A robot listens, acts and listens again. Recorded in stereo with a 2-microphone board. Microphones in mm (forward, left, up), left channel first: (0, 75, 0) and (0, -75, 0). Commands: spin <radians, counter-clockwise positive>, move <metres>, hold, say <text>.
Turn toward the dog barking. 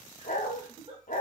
spin 1.05
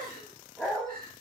say Facing the dog barking.